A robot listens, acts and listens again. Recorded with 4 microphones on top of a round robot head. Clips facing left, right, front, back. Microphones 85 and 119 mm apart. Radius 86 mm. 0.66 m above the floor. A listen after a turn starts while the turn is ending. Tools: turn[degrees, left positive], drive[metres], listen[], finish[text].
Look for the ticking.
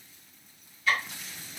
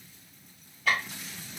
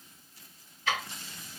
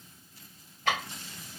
Thought: The ticking: 135° right.
Action: turn[-135]
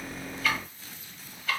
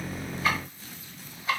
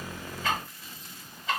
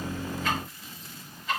Thought: The ticking is now 20° right.
Action: turn[-20]
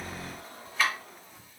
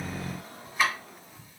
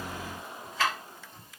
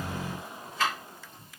Action: finish[Found it: ticking, straight ahead, 1 to 2 m away.]